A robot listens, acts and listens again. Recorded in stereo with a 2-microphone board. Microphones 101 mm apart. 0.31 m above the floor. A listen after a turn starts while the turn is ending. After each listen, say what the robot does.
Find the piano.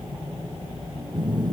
Keep listening.
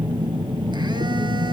Keep listening.
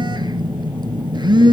I can't make out a piano, only a phone buzzing.